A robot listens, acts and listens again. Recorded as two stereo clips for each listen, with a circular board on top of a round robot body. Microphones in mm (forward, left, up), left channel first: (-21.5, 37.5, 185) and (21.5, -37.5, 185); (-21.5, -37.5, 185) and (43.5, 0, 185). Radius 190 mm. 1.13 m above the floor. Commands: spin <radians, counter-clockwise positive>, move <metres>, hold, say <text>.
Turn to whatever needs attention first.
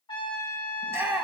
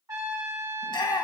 spin -2.18
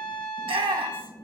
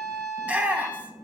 spin -0.70
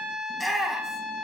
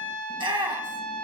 spin 0.52
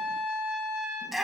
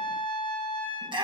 spin 0.44
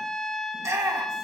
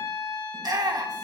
say Facing the shout, 1 to 2 m away.